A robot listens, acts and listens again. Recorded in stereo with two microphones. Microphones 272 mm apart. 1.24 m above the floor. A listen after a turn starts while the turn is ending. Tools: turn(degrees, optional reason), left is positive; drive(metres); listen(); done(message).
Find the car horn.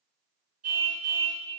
turn(degrees=-75, reason="The car horn: about 75° right or 105° right.")
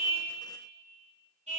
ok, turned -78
turn(degrees=-25, reason="So it is at 25° right.")
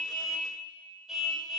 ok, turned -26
done("Found it: a car horn, straight ahead, over 4 m away.")